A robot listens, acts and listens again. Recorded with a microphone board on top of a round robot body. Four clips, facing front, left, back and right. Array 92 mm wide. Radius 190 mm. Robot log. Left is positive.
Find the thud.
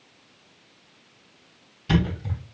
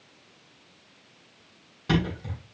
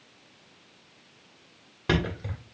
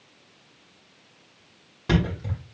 note: The thud: 165° right.
cmd yaw -165
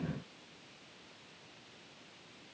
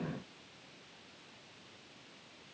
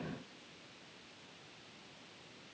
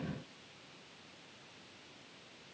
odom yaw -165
end: Facing where the thud came from. I can't hear it now.